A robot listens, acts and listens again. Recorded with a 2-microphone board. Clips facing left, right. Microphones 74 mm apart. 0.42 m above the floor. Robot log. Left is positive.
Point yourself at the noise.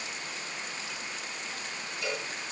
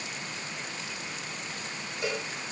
note: The cowbell: about 25° right or 155° right.
cmd yaw -25
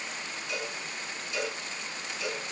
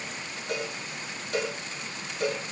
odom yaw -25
note: So it is at 130° right.
cmd yaw -130
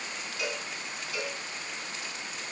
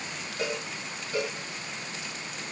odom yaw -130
note: The cowbell is now 40° right.
cmd yaw -40
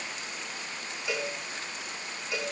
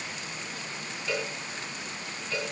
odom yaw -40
note: The cowbell is now 15° left.
cmd yaw +15
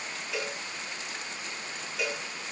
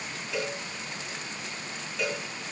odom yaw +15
end: Found it: a cowbell, straight ahead.